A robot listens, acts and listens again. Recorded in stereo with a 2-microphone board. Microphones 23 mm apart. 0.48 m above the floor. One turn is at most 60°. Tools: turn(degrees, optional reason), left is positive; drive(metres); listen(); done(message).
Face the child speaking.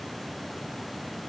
listen()
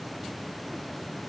listen()
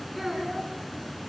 turn(degrees=-30)
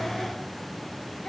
listen()
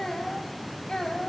turn(degrees=35, reason="So it is at 35° left.")
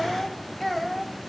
done("Facing the child speaking.")